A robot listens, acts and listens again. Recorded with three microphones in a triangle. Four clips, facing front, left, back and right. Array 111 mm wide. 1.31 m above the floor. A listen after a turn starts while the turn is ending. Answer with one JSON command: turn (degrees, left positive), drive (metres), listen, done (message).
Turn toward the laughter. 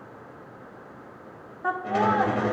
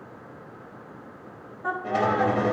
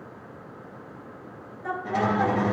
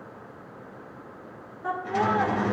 {"done": "Found it: laughter, straight ahead."}